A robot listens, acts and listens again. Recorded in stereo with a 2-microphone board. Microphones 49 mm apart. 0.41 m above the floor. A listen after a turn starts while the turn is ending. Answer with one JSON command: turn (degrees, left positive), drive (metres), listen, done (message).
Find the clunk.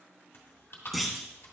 {"turn": 30}
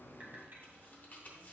{"listen": true}
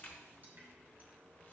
{"done": "I heard a clunk, but can't make it out now. It was about 30° right or 150° left."}